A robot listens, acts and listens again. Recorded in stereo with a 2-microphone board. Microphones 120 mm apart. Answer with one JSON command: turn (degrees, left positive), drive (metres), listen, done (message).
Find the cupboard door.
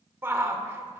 {"listen": true}
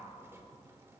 {"listen": true}
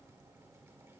{"done": "I can't make out a cupboard door to turn to."}